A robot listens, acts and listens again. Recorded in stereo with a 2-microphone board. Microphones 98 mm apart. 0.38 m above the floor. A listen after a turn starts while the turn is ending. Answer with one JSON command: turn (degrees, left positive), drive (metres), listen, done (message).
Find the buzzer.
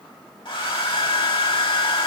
{"listen": true}
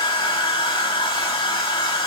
{"listen": true}
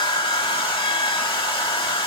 {"done": "I can't make out a buzzer, only a hair dryer."}